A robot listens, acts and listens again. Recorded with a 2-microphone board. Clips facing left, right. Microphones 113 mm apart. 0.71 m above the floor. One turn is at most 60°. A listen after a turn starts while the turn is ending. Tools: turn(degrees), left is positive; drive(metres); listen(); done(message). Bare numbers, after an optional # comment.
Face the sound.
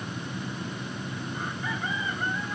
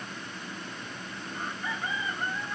listen()
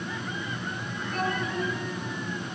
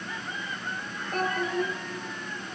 # The child speaking: about 50° right or 130° right.
turn(-50)
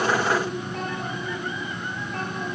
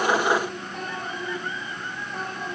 # So it is at 10° right.
turn(-10)
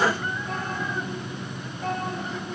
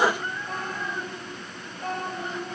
done("Found it: a child speaking, straight ahead.")